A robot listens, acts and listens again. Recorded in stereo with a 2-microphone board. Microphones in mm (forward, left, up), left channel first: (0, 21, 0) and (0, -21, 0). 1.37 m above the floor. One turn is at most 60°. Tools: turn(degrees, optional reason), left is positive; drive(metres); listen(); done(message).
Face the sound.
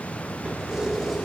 turn(degrees=-30)
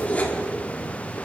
turn(degrees=35, reason="So it is at 35° left.")
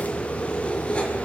turn(degrees=25, reason="The keys jangling is now 25° left.")
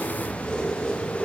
turn(degrees=20, reason="The keys jangling is now 20° left.")
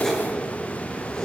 turn(degrees=15, reason="The keys jangling is now 15° left.")
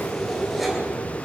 done("Found it: keys jangling, straight ahead.")